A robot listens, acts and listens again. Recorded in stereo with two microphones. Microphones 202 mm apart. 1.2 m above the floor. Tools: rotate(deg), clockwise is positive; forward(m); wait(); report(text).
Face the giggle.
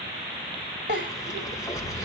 rotate(60)
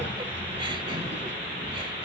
wait()
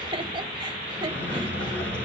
rotate(30)
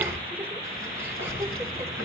wait()
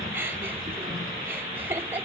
rotate(10)
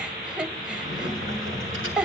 report("Found it: a giggle, straight ahead, 1 to 2 m away.")